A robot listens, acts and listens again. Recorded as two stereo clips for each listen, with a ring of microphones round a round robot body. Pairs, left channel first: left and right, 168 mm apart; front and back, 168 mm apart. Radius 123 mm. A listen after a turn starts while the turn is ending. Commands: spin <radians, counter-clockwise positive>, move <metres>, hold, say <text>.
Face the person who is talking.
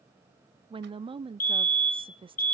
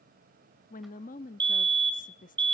spin -0.61
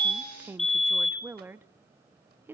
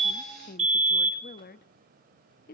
spin -0.26
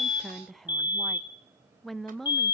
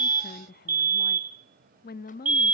say Facing the woman speaking.